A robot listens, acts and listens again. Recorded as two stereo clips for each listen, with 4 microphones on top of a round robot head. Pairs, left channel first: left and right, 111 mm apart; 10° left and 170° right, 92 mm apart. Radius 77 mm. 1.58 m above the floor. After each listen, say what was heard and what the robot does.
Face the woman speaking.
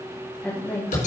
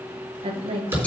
The woman speaking: 165° left. Turn 165° left.
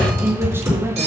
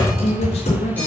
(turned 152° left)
The woman speaking is now 25° right. Turn 25° right.
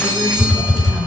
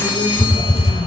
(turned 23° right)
Keep listening.
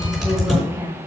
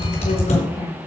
The woman speaking is now 25° right. Turn 25° right.
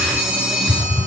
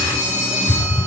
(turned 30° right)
Keep listening.
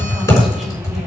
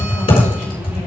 Keep listening.
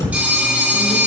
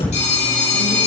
Facing where the woman speaking came from. I can't hear it now.